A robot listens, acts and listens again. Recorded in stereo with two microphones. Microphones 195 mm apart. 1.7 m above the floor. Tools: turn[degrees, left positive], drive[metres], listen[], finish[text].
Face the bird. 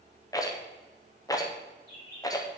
Thought: The bird: about 50° right or 130° right.
Action: turn[-50]
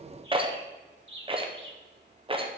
Thought: So it is at 80° right.
Action: turn[-80]
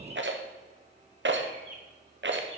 Thought: The bird is now 25° right.
Action: turn[-25]
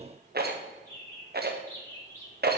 Thought: The bird is now 15° left.
Action: turn[15]
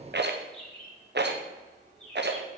Action: finish[Found it: a bird, straight ahead, 2 to 4 m away.]